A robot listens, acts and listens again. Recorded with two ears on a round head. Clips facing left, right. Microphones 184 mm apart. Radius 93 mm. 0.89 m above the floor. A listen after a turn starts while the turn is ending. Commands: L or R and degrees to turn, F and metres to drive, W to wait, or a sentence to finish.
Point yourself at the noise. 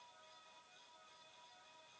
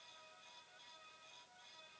W
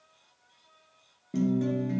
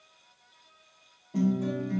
L70
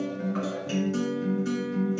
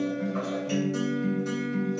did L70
L30
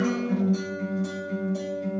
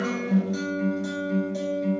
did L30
R10
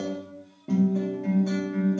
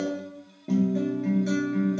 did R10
Found it: a guitar, straight ahead.